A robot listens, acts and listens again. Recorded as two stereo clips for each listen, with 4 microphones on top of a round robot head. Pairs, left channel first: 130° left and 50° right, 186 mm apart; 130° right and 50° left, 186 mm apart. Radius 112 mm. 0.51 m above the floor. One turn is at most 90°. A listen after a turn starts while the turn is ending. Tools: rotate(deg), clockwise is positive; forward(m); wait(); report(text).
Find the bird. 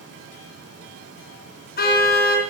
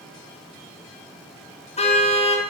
wait()
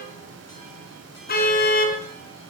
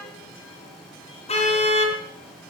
wait()
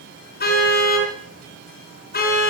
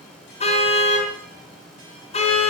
report("I can't make out a bird to turn to.")